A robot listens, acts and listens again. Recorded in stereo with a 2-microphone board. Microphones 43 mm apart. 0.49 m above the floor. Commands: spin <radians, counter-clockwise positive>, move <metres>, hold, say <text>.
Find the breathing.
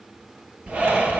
spin -0.52
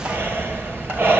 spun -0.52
spin -2.18
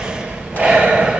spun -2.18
spin -0.44
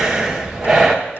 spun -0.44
spin -0.17
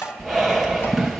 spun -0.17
say Found it: breathing, straight ahead.